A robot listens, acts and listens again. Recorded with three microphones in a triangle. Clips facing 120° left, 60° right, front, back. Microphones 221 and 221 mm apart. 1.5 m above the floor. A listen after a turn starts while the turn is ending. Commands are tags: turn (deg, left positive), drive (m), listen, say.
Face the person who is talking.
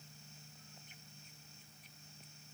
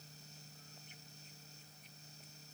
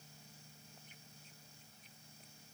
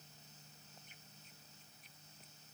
<listen/>
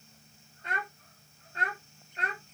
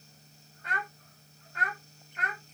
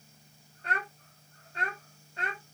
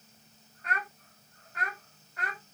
<turn deg="65"/>
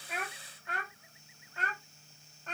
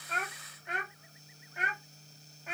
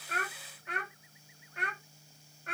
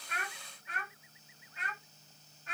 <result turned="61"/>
<turn deg="20"/>
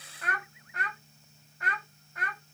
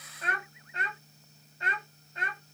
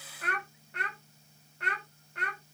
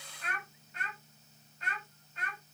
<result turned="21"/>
<say>Facing the child speaking.</say>